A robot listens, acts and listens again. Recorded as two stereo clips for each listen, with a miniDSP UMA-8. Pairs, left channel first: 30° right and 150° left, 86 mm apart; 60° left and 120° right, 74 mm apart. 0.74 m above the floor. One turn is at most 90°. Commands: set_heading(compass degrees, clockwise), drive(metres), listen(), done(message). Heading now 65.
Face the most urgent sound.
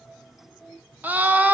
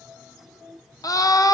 set_heading(345)
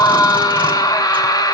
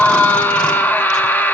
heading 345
done("Found it: a scream, straight ahead, under 1 m away.")